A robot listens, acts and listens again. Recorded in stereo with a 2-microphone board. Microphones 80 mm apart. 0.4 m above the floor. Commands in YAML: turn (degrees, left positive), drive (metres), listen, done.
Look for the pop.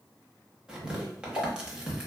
turn: 45
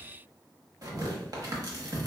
listen: true
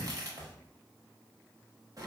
done: "I heard a pop, but can't make it out now. It was about straight ahead or 90° left."